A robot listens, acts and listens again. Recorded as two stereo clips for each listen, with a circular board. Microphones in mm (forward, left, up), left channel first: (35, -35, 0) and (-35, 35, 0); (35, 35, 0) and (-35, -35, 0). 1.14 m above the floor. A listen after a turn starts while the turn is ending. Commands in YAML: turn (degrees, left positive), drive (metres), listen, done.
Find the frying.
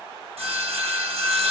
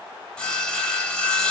listen: true
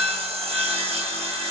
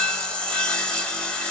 listen: true
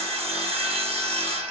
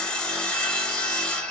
done: "I can't make out frying, only sawing."